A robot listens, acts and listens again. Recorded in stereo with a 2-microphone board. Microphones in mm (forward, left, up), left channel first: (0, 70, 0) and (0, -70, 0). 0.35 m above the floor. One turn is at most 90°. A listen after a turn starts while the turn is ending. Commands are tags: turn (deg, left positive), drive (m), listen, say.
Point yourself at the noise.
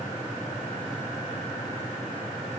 <listen/>
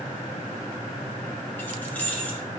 <turn deg="30"/>
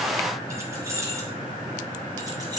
<turn deg="-30"/>
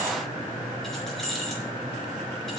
<say>Facing the keys jangling.</say>